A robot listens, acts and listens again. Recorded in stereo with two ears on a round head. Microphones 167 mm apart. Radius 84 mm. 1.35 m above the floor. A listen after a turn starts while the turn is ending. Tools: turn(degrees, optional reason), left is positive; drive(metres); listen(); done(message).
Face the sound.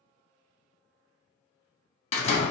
turn(degrees=35, reason="The door slam: about 35° left or 145° left.")
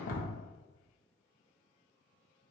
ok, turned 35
listen()
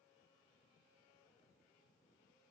done("I heard a door slam, but can't make it out now. It was about straight ahead or 110° left.")